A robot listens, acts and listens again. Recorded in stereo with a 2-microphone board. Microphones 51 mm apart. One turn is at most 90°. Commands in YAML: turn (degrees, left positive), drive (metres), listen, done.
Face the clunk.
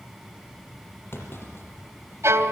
turn: 50
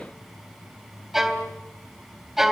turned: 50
listen: true
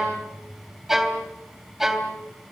done: "I heard a clunk, but can't make it out now. It was about straight ahead or 80° left."